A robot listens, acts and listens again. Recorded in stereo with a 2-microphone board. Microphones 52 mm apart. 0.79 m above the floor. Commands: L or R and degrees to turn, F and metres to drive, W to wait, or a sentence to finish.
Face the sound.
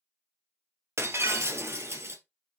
R55
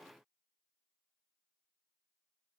W
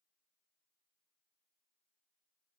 I heard breaking glass, but can't make it out now. It was about straight ahead or 70° right.